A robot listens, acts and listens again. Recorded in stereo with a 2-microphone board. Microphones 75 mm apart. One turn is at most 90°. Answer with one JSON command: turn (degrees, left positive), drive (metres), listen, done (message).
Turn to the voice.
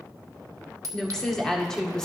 {"turn": 30}
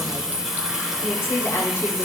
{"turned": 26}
{"turn": 90}
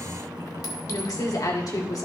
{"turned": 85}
{"turn": 60}
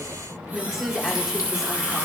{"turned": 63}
{"done": "Facing the woman speaking."}